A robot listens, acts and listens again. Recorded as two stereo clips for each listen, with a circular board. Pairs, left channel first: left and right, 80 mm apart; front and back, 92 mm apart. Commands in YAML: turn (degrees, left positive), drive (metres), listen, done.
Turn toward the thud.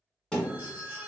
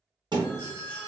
turn: 170
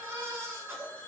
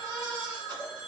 done: "Facing where the thud came from. I can't hear it now."